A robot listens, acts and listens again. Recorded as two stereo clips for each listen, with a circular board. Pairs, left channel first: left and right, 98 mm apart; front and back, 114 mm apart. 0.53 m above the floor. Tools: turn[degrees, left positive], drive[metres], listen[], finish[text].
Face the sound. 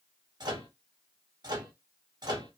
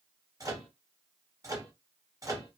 Thought: The microwave: 125° right.
Action: turn[-125]
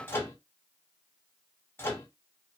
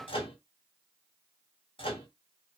Thought: The microwave is now 25° left.
Action: turn[25]
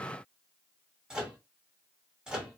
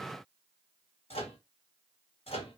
Thought: The microwave is now 10° right.
Action: turn[-10]
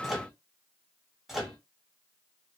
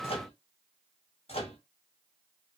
Action: finish[Found it: a microwave, straight ahead.]